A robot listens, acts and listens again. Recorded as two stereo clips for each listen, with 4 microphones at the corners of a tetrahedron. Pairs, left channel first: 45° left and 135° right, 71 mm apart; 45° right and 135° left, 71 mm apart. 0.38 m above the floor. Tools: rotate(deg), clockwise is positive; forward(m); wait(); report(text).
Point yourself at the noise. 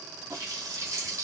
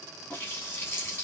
rotate(100)
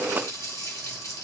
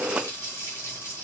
report("Found it: a running tap, straight ahead.")